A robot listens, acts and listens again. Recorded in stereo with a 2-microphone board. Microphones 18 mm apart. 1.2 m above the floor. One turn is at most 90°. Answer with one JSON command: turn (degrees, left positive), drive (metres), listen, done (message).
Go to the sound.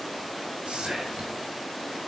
{"turn": -90}
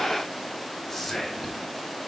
{"turn": 10}
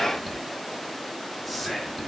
{"drive": 1.0}
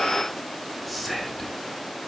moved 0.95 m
{"drive": 1.0}
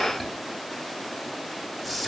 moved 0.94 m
{"drive": 1.0}
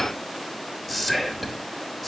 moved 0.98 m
{"drive": 1.0}
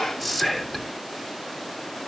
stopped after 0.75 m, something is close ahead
{"done": "I am next to the whispering."}